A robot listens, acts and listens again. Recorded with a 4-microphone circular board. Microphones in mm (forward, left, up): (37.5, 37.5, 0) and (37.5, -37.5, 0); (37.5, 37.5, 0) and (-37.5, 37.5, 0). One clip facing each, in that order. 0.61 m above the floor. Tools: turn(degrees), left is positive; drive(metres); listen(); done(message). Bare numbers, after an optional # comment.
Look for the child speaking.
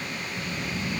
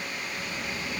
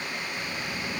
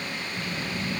# The child speaking: straight behind.
turn(180)
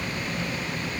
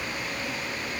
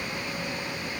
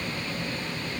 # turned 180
done("Found it: a child speaking, straight ahead.")